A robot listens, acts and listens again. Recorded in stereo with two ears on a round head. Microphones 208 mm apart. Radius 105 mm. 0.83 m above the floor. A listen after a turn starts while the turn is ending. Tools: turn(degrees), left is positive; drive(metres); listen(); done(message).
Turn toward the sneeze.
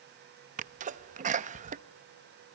turn(degrees=-35)
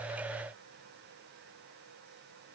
listen()
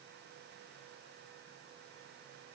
done("I heard a sneeze, but can't make it out now. It was about straight ahead or 110° right.")